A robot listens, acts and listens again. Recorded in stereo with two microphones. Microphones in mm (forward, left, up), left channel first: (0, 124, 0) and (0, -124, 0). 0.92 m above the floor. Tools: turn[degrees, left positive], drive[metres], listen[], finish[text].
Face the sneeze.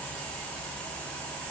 Action: listen[]
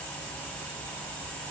Action: listen[]
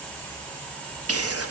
Thought: The sneeze: about 70° right or 110° right.
Action: turn[-70]
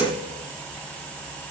Action: listen[]
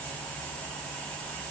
Action: finish[I heard a sneeze, but can't make it out now. It was about straight ahead or 40° right.]